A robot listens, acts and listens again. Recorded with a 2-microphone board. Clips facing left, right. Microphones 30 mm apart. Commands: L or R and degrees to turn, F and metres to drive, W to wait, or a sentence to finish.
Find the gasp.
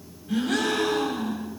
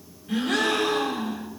R45
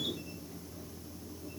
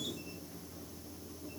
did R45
W
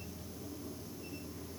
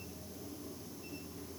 I heard a gasp, but can't make it out now. It was about straight ahead or 90° right.